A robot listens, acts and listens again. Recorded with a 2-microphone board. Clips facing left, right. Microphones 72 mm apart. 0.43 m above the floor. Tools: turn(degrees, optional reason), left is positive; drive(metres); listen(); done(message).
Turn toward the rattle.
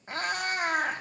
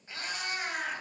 listen()
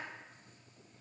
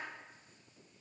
listen()
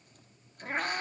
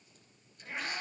done("I can't make out a rattle, only a cat meowing.")